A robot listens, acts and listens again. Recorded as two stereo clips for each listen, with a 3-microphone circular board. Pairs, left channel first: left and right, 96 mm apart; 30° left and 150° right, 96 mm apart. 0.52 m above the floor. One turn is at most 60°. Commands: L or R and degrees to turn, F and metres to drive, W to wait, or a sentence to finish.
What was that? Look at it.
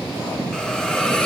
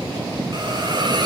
L60
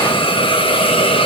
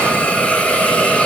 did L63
L60
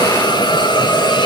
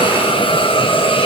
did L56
L50
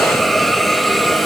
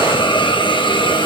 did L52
Facing the hiss.